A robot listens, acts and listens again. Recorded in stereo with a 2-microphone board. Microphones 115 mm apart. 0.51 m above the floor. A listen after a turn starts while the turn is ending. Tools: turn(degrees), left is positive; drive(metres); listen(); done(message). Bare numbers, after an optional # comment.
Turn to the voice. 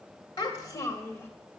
# The child speaking: about 25° left or 155° left.
turn(25)
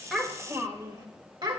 # So it is at 45° right.
turn(-45)
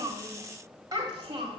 # The child speaking is now 45° right.
turn(-45)
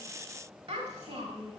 # The child speaking is now 50° right.
turn(-50)
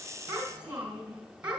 # The child speaking is now 15° right.
turn(-15)
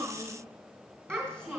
done("Found it: a child speaking, straight ahead, 2 to 4 m away.")